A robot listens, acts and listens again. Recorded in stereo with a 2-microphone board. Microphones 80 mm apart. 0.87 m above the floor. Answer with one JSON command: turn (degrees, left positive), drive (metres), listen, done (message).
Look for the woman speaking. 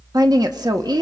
{"turn": -60}
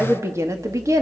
{"turn": -45}
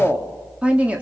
{"turn": -15}
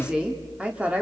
{"turn": -15}
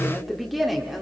{"done": "Found it: a woman speaking, straight ahead, 2 to 4 m away."}